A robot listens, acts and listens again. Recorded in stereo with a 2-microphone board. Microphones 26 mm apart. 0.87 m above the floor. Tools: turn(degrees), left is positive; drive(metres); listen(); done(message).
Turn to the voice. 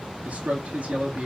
turn(degrees=-65)
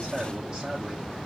turn(degrees=-45)
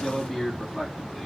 done("Facing the man speaking.")